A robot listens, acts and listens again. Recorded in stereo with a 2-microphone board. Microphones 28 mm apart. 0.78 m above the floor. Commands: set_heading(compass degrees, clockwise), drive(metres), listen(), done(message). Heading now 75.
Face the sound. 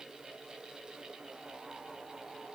listen()
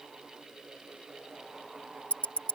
set_heading(25)
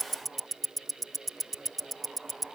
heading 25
set_heading(15)
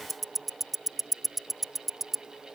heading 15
done("Found it: ticking, straight ahead.")